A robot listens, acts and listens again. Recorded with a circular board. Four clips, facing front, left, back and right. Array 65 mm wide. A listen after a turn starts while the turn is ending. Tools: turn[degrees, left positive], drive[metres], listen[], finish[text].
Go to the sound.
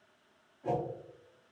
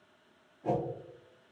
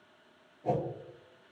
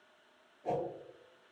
Thought: The whoosh: 60° left.
Action: turn[60]
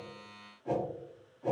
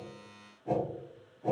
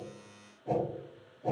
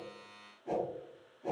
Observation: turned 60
Thought: The whoosh is now 15° left.
Action: turn[15]
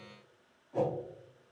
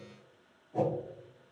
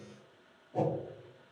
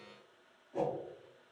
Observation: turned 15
Action: drive[1.0]
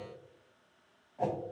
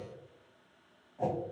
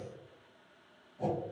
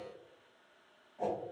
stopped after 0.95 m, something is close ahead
Action: finish[I am next to the whoosh.]